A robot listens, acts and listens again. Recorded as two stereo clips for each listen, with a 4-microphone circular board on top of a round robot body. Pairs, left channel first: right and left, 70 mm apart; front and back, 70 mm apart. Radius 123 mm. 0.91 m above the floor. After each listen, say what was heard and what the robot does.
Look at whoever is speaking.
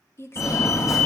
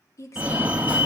The woman speaking: 40° right. Turn 40° right.
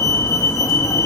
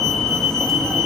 Keep listening.
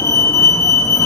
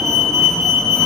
Keep listening.
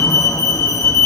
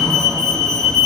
I heard a woman speaking from this way, but can't make it out now.